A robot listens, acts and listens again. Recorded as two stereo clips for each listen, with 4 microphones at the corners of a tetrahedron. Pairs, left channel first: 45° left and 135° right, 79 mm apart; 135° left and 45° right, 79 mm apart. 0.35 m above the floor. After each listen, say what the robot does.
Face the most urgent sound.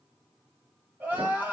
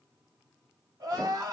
Turn 70° right.
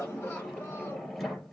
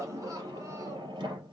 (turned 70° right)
Keep listening.
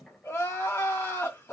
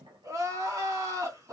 Turn 10° right.
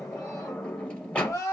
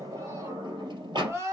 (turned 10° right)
Facing the crying, 2 to 4 m away.